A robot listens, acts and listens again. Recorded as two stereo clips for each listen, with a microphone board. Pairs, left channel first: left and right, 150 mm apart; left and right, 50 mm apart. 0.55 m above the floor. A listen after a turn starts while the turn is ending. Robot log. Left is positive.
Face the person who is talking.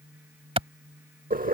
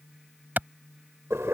cmd idle
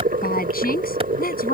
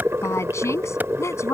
cmd yaw +90
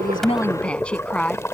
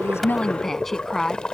end: Found it: a woman speaking, straight ahead.